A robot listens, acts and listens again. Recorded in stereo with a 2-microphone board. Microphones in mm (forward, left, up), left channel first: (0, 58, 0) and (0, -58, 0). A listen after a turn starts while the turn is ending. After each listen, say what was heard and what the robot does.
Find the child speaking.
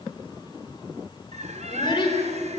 The child speaking: about 40° left or 140° left. Turn 40° left.
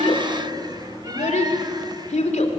So it is at 95° left. Turn 95° left.
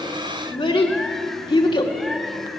The child speaking is now 45° left. Turn 45° left.
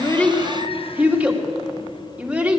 The child speaking is now 10° right. Turn 10° right.
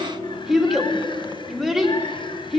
Found it: a child speaking, straight ahead.